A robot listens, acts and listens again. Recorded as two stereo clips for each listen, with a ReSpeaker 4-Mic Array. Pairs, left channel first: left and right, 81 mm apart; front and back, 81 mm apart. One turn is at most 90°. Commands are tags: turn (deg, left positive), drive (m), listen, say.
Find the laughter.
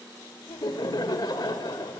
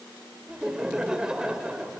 <turn deg="90"/>
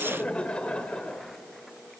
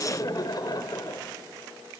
<turn deg="15"/>
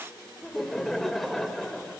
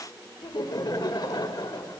<say>Facing the laughter.</say>